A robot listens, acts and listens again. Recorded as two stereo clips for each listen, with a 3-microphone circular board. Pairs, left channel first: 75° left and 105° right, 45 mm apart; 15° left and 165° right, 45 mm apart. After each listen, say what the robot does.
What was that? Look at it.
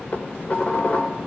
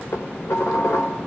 Turn 15° left.
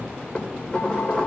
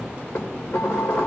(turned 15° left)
Found it: dishes clattering, straight ahead, 2 to 4 m away.